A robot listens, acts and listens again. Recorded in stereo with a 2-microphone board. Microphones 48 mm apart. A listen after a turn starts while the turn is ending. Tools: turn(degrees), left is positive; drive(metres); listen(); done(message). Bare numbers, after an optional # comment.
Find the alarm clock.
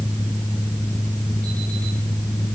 listen()
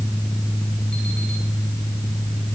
listen()
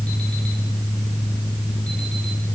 done("I can't make out an alarm clock to turn to.")